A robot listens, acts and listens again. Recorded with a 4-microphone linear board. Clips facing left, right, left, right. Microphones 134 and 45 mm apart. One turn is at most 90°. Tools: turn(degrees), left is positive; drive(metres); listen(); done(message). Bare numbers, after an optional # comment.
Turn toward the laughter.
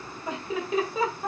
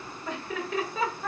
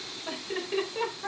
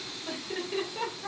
# The laughter: about 20° left or 160° left.
turn(20)
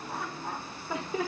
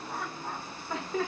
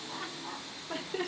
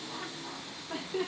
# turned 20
turn(30)
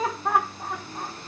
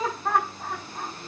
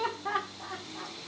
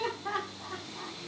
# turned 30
turn(30)
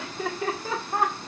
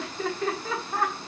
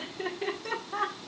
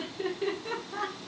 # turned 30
# The laughter: about 20° left or 160° left.
turn(20)
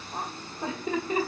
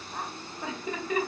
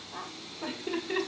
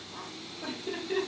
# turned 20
# The laughter: about 25° left or 155° left.
turn(25)
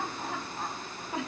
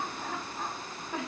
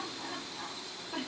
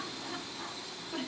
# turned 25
turn(30)
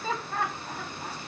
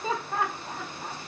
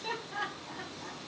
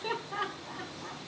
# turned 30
# So it is at 15° right.
turn(-15)
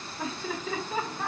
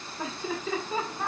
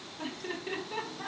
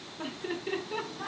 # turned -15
done("Found it: laughter, straight ahead.")